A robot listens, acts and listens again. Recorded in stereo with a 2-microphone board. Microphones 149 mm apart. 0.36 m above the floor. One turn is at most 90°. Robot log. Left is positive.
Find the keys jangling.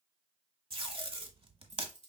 note: The keys jangling: about 50° right or 130° right.
cmd yaw -50
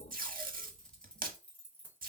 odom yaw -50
note: So it is at 15° left.
cmd yaw +15
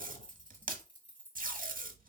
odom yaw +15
note: The keys jangling is now 15° left.
cmd yaw +15
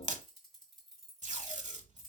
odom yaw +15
end: Found it: keys jangling, straight ahead.